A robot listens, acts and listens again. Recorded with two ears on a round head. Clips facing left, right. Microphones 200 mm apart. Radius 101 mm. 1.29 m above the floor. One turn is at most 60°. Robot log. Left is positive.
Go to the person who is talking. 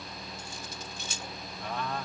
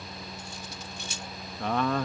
note: The man speaking: about 55° right or 125° right.
cmd yaw -55
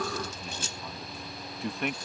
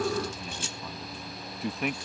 cmd fwd 1.0
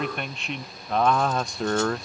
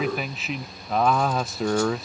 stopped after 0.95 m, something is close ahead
end: Arrived at the man speaking, straight ahead.